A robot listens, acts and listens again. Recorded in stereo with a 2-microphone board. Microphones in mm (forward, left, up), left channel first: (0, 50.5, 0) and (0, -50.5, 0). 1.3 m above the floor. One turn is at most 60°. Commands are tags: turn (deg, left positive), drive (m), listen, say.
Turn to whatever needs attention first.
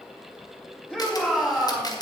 <turn deg="30"/>
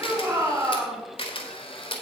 <turn deg="-20"/>
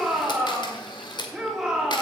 <say>Found it: a shout, straight ahead, 2 to 4 m away.</say>